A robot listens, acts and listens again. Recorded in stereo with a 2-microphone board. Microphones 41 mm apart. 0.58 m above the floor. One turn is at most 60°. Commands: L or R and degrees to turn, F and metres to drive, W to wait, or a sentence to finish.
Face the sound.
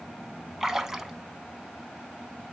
R30
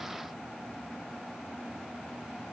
W
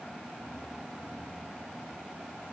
I heard a splash, but can't make it out now. It was about 15° left or 135° right.